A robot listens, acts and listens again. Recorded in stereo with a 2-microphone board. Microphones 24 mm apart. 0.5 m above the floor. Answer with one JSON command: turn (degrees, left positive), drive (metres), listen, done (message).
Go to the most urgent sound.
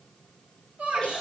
{"turn": -70}
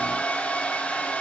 {"listen": true}
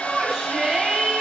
{"turn": -30}
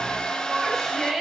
{"drive": 1.0}
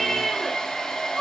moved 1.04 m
{"turn": 15}
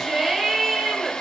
{"drive": 1.0}
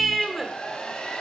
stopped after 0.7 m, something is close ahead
{"turn": -10}
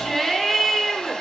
{"done": "Arrived at the shout, straight ahead."}